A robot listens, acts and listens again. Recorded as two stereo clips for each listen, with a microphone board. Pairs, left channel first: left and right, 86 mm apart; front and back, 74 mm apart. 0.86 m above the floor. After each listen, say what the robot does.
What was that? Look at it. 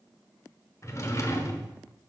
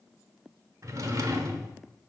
Turn 140° left.
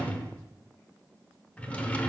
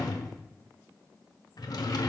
Turn 15° left.
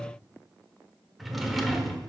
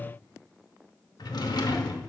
Found it: a drawer, straight ahead.